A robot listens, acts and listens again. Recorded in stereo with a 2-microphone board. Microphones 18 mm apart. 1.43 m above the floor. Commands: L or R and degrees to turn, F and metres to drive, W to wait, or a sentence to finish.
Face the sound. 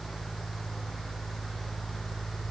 W
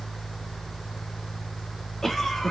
L25
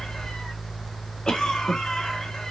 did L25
L130
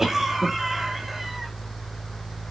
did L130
R20
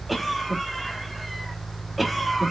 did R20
Facing the cough, 2 to 4 m away.